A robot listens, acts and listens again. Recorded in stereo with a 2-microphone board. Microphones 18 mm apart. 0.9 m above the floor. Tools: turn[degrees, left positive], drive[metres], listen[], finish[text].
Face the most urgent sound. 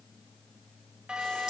Action: turn[-90]
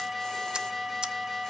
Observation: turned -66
Thought: So it is at 10° right.
Action: turn[-10]
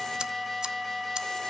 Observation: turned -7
Action: finish[Facing the alarm, 2 to 4 m away.]